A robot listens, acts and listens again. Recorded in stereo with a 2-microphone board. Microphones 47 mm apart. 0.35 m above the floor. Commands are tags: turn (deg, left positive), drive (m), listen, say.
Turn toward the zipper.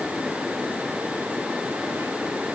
<listen/>
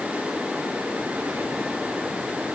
<listen/>
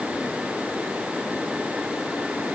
<say>I can't make out a zipper to turn to.</say>